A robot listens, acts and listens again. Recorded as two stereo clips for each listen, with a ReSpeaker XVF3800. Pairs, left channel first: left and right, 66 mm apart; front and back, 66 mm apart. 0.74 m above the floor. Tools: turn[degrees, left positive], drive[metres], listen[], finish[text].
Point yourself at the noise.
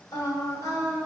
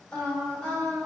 Thought: The singing: 75° left.
Action: turn[75]
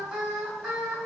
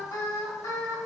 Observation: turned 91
Thought: The singing is now 10° right.
Action: turn[-10]
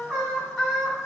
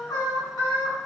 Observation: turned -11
Action: finish[Facing the singing.]